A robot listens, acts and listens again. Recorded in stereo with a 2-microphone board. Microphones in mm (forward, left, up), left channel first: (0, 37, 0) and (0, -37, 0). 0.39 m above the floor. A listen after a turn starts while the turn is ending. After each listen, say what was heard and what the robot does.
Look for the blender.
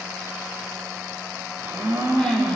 The blender: about 35° right or 145° right. Turn 35° right.
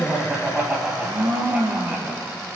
So it is at 110° right. Turn 110° right.
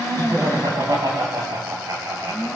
The blender is now 10° right. Turn 10° right.
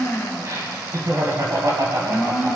Facing the blender.